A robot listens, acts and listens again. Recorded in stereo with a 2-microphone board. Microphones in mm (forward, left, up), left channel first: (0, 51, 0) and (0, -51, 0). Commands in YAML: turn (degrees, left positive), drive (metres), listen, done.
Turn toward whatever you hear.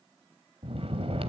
turn: -70
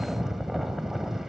done: "Found it: snoring, straight ahead."